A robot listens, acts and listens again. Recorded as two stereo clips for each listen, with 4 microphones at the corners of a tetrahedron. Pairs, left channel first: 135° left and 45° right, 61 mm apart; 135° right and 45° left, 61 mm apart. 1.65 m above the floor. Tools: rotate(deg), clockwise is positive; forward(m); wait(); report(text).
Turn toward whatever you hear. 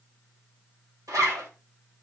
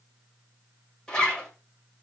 rotate(55)
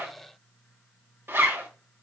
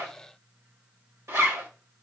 report("Facing the zipper.")